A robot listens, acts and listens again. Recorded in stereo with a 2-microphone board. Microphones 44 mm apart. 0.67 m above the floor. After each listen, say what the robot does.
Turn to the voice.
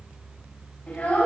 Turn 25° left.
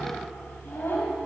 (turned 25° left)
Turn 130° left.
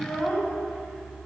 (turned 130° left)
Turn 15° left.
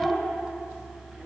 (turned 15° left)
Found it: a child speaking, straight ahead, 2 to 4 m away.